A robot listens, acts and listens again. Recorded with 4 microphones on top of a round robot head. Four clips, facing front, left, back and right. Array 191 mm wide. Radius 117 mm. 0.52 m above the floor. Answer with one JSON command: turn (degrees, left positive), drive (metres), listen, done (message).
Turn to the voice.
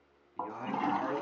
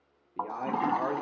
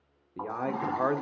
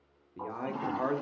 {"turn": 175}
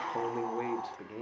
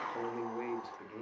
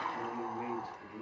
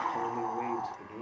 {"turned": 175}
{"turn": -10}
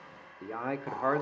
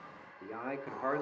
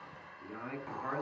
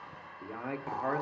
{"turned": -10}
{"done": "Found it: a man speaking, straight ahead, 1 to 2 m away."}